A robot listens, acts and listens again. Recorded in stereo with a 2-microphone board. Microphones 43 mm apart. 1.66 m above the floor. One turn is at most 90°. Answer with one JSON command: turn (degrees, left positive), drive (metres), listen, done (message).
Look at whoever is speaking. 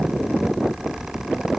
{"listen": true}
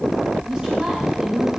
{"turn": -15}
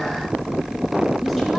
{"listen": true}
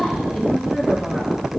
{"done": "Found it: a woman speaking, straight ahead, 1 to 2 m away."}